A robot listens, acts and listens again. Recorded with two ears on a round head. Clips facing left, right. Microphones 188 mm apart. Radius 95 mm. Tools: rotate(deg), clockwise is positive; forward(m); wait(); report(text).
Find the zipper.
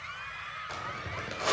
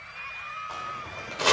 rotate(-25)
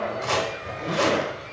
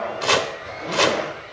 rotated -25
report("Found it: a zipper, straight ahead, 2 to 4 m away.")